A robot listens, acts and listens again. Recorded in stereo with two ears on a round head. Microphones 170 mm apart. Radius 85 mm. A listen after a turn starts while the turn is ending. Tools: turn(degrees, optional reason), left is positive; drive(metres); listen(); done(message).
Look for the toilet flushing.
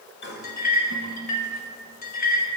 turn(degrees=55, reason="The toilet flushing: about 55° left or 125° left.")
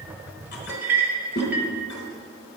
turn(degrees=60, reason="So it is at 60° left.")
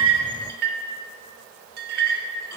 listen()
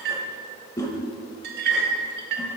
turn(degrees=20, reason="The toilet flushing is now 20° left.")
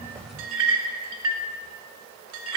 listen()
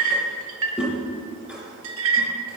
done("Found it: a toilet flushing, straight ahead, 1 to 2 m away.")